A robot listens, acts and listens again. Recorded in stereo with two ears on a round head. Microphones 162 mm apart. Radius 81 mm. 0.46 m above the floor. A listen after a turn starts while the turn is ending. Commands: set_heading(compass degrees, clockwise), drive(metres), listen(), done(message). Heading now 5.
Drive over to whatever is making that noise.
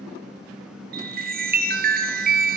set_heading(55)
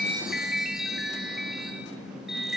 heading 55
drive(1.0)
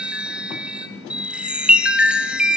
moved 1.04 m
drive(1.0)
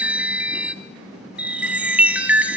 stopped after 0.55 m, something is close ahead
set_heading(65)
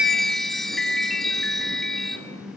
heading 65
done("Arrived at the chime, straight ahead.")